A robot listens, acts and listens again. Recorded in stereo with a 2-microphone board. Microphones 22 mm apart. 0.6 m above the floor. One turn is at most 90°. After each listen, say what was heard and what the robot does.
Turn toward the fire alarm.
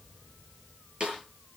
Keep listening.
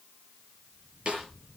Keep listening.
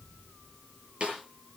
I can't make out a fire alarm to turn to.